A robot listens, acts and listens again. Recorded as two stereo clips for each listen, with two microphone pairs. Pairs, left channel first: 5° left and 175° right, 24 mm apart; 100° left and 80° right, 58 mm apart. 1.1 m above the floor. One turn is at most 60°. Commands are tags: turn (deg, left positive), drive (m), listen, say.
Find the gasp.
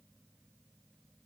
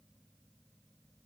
<listen/>
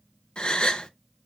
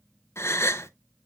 <turn deg="55"/>
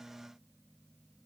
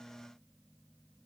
<say>I heard a gasp from this way, but can't make it out now.</say>